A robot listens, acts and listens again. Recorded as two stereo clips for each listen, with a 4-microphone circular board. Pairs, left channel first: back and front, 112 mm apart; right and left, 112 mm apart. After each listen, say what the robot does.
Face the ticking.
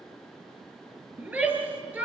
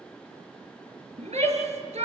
Keep listening.
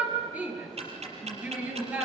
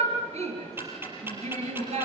Turn 20° left.
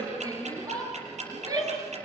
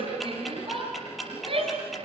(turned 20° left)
Found it: ticking, straight ahead, over 4 m away.